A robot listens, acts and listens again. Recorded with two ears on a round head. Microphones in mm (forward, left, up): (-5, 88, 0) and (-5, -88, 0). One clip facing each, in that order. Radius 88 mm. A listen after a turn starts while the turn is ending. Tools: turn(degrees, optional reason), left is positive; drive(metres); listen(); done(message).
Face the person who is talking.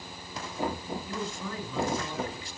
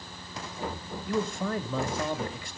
turn(degrees=-45, reason="The man speaking: about 45° right or 135° right.")
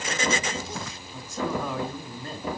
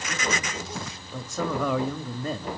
turn(degrees=-80, reason="So it is at 80° right.")
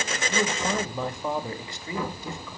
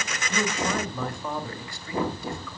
turn(degrees=20, reason="The man speaking is now 20° left.")
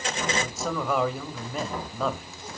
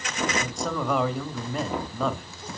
done("Found it: a man speaking, straight ahead.")